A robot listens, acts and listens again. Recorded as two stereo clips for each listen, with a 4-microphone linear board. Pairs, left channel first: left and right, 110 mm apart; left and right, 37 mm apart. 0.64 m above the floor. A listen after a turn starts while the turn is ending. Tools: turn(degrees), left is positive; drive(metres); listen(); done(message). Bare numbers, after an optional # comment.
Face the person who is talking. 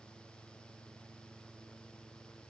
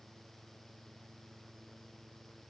listen()
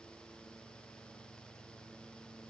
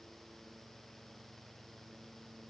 listen()
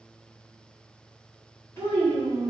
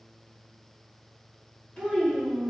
# The child speaking: about 25° left or 155° left.
turn(25)
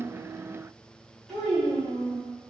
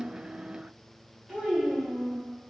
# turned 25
done("Found it: a child speaking, straight ahead.")